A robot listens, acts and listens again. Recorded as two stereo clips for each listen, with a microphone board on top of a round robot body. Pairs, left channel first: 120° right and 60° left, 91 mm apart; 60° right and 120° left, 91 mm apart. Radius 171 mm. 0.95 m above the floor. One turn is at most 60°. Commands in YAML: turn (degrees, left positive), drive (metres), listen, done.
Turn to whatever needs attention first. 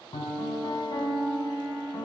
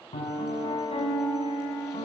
listen: true
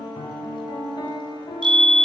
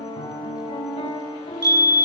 turn: 60
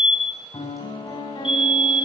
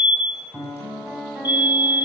turn: -20
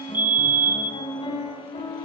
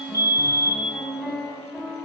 done: "Found it: a fire alarm, straight ahead."